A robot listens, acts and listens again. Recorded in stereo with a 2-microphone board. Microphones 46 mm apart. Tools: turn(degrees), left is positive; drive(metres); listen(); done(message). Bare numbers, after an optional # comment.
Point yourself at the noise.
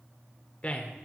# The man speaking: about 30° left or 150° left.
turn(30)
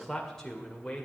# So it is at 10° left.
turn(10)
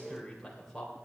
# The man speaking is now 10° left.
turn(10)
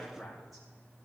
done("Found it: a man speaking, straight ahead, 2 to 4 m away.")